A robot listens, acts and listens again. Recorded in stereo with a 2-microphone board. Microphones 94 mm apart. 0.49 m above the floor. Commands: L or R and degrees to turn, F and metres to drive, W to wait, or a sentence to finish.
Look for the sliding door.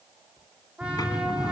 L50
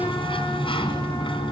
L80
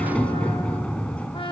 L15
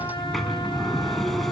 Facing the sliding door, 2 to 4 m away.